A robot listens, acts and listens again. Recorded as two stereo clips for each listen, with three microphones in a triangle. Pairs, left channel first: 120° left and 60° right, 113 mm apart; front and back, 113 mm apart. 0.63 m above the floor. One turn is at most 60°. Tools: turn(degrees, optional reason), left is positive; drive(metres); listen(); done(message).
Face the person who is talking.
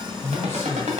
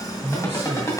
turn(degrees=-60, reason="The man speaking: 170° right.")
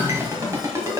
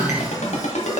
turn(degrees=-60, reason="Nothing new. It was at 110° right.")
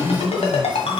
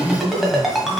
turn(degrees=-15, reason="The man speaking is now 15° right.")
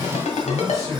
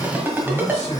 done("Facing the man speaking, 2 to 4 m away.")